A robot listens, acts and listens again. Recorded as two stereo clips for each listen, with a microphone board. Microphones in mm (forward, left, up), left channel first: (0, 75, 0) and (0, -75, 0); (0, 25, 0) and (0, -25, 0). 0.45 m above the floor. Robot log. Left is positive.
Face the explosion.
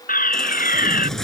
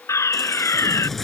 cmd yaw -90
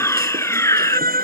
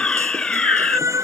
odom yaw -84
end: I heard an explosion from this way, but can't make it out now.